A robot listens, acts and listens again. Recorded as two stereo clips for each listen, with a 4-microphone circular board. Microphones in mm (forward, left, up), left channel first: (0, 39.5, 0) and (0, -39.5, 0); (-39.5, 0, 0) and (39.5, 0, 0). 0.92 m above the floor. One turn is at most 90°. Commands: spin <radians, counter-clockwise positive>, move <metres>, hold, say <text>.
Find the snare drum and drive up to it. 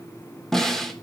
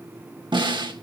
move 1.0
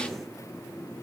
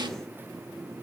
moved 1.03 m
hold
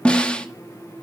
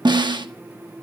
spin 0.26
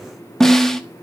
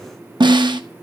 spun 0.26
move 1.0
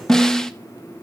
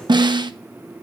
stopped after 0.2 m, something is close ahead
say Arrived at the snare drum, straight ahead.